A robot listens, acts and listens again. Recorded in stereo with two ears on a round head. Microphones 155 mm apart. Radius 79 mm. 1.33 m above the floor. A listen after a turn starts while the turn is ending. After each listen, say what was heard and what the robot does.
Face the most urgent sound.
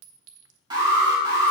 The alarm: about 25° right or 155° right. Turn 25° right.
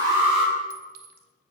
Keep listening.
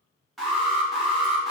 Found it: an alarm, straight ahead, 2 to 4 m away.